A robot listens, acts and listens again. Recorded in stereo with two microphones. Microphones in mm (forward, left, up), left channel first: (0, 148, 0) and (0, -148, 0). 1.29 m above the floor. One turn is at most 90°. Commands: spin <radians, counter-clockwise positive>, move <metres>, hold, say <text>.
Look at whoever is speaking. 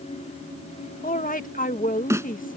spin 0.44
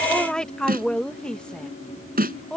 say Found it: a woman speaking, straight ahead.